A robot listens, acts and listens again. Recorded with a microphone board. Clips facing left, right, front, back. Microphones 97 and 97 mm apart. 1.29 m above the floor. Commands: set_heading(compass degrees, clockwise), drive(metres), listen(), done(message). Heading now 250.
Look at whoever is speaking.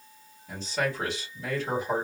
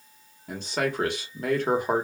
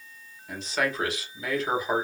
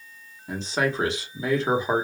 set_heading(10)
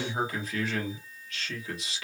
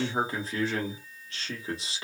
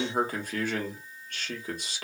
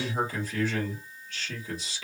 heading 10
set_heading(40)
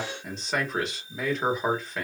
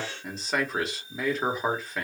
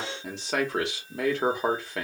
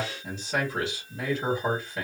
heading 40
done("Facing the man speaking, 1 to 2 m away.")